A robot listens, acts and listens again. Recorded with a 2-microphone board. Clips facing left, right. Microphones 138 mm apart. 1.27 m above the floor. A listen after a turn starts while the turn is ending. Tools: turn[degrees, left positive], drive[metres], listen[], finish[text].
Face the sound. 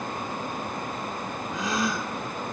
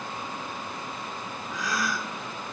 Thought: The gasp: about 25° left or 155° left.
Action: turn[25]
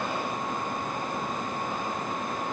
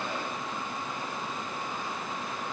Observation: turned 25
Action: listen[]
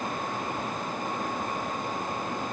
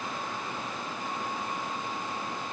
Action: finish[I heard a gasp, but can't make it out now. It was about straight ahead or 130° left.]